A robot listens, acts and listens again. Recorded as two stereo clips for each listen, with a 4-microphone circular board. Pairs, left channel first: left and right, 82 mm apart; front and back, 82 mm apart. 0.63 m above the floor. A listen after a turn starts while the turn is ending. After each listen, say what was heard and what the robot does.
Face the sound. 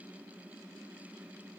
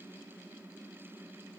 Keep listening.
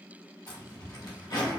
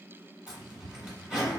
The zipper: 100° left. Turn 100° left.
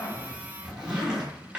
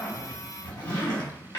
The zipper is now 10° right. Turn 10° right.
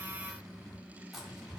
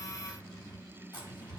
Facing the zipper, 1 to 2 m away.